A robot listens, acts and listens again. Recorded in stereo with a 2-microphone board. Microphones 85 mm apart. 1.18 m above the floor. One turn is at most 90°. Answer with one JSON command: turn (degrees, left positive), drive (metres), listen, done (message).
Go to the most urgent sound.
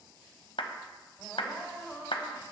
{"turn": -30}
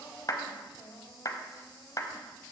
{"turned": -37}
{"turn": 35}
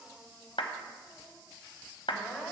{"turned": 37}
{"drive": 1.0}
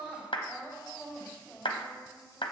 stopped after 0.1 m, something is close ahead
{"done": "Something is in my way. I am facing the crying but have not reached it."}